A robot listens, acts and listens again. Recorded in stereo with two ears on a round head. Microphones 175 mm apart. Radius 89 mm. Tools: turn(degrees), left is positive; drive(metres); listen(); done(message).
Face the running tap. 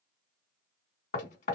listen()
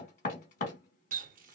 turn(degrees=-45)
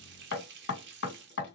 turn(degrees=-80)
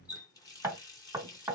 turn(degrees=20)
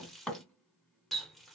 done("Facing the running tap, under 1 m away.")